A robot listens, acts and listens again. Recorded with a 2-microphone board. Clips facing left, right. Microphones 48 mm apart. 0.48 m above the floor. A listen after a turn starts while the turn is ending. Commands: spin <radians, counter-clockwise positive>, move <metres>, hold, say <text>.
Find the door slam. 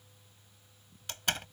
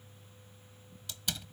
spin 0.87
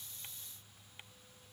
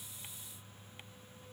hold
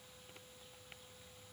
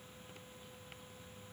say I heard a door slam, but can't make it out now. It was about straight ahead or 80° left.